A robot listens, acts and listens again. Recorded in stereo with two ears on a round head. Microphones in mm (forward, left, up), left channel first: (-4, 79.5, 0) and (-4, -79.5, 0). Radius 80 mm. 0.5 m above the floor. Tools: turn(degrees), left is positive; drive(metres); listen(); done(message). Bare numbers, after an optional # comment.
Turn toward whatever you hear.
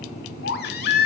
# The baby crying: about 60° left or 120° left.
turn(60)
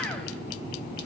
listen()
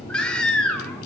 done("Found it: a baby crying, straight ahead, 1 to 2 m away.")